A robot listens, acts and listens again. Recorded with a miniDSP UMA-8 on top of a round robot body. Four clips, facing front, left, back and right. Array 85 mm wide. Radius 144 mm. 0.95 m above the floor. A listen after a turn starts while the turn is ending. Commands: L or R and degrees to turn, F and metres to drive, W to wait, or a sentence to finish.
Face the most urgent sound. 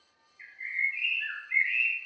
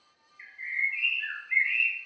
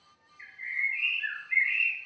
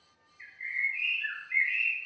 W
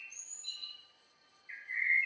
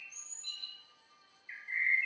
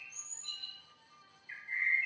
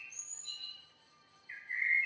W
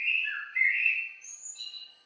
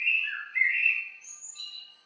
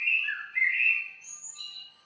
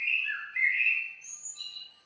I can't make out anything urgent to turn to.